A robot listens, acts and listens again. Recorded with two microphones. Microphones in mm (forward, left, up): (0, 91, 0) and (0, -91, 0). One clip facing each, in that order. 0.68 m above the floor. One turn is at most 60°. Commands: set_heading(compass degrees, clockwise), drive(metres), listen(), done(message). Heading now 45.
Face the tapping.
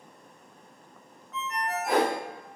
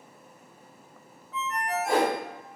listen()
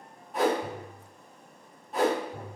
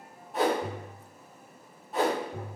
set_heading(105)
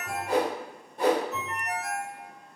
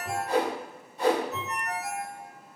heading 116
listen()
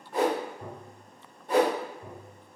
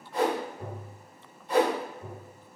set_heading(141)
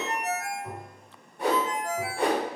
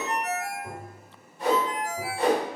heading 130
set_heading(140)
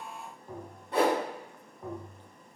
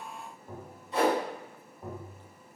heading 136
done("Facing the tapping.")